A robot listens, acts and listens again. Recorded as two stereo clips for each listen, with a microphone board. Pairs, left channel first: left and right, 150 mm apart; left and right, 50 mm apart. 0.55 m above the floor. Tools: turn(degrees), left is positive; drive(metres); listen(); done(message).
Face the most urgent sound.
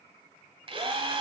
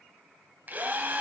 listen()
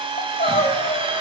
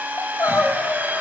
turn(degrees=90)
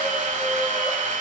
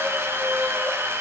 listen()
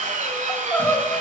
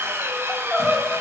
turn(degrees=10)
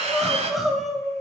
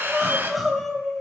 done("Facing the crying, 1 to 2 m away.")